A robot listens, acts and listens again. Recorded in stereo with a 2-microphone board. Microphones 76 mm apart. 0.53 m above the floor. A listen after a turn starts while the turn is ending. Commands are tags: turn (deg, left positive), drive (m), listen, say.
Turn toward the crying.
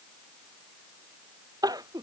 <turn deg="-50"/>
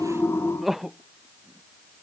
<say>Facing the crying.</say>